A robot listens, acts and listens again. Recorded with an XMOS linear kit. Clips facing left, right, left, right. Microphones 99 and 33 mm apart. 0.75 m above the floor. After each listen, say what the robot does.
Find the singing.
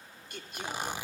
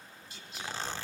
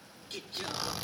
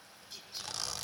Turn 55° left.
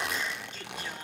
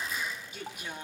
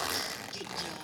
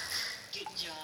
Turn 15° right.
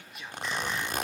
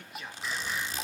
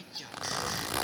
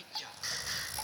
Found it: singing, straight ahead.